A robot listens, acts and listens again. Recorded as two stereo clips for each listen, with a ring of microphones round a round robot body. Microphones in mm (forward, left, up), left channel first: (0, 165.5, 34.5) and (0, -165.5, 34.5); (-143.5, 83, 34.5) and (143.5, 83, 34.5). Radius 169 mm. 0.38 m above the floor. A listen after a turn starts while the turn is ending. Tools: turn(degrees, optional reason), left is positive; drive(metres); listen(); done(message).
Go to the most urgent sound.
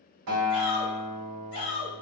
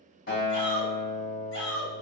turn(degrees=140, reason="The shout: 140° left.")
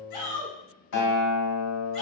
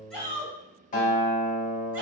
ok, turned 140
listen()
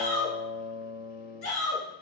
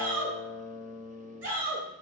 turn(degrees=25, reason="The shout is now 25° left.")
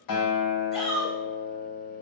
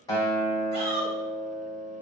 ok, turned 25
drive(metres=1.0)
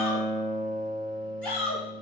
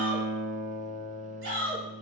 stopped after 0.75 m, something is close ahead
done("I am next to the shout.")